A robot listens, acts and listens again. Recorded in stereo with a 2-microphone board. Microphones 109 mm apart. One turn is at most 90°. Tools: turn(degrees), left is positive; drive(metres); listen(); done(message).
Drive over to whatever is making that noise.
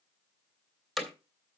turn(degrees=30)
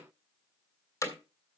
turn(degrees=90)
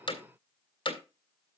turn(degrees=55)
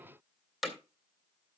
drive(metres=1.0)
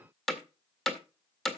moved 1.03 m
drive(metres=1.0)
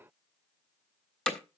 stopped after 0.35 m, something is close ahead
turn(degrees=15)
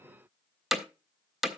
done("Arrived at the hammering, straight ahead.")